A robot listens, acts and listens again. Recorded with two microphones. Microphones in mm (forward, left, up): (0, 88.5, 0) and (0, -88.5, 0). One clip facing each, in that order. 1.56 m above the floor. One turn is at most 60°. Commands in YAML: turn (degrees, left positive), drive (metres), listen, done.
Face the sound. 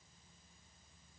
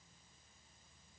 listen: true
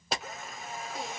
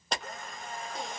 turn: 30
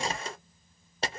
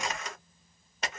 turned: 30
turn: 60
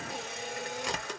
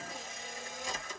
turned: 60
turn: 60
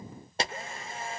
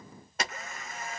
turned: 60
turn: 30
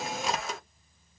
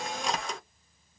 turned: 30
done: "Found it: a camera shutter, straight ahead, under 1 m away."